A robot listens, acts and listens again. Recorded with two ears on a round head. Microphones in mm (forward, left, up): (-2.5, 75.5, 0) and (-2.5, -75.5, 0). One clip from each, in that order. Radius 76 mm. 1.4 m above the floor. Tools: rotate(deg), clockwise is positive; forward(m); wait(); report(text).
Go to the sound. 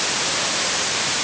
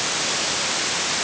wait()
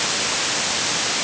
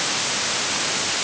wait()
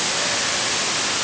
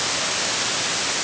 report("I can't make out anything to turn to.")